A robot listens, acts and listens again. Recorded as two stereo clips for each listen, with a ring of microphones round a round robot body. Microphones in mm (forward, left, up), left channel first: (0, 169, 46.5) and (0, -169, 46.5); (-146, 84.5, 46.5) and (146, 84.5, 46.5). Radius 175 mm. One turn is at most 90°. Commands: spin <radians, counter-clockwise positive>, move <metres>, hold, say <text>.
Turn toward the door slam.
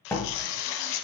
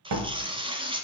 say Found it: a door slam, straight ahead, 1 to 2 m away.